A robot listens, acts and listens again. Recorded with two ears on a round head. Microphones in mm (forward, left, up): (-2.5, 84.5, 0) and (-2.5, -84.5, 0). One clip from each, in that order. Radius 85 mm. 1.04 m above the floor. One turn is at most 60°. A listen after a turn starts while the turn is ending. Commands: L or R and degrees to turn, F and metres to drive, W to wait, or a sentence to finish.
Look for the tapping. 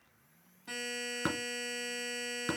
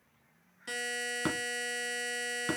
L30
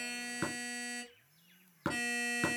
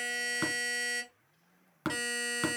R30
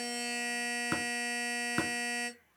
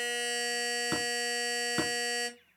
L10
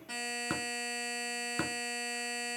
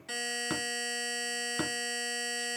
Facing the tapping.